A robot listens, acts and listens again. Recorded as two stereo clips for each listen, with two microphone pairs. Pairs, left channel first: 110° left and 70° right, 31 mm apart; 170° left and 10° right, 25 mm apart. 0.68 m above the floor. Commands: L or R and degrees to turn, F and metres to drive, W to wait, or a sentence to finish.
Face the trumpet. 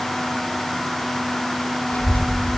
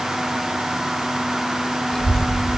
W
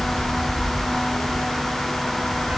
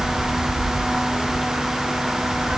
W
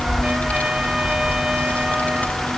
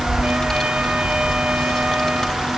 I can't make out a trumpet to turn to.